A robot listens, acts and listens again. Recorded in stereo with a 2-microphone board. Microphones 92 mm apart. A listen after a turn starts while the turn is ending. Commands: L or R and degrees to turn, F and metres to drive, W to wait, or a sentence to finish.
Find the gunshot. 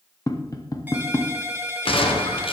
L90
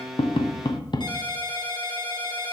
I heard a gunshot from this way, but can't make it out now.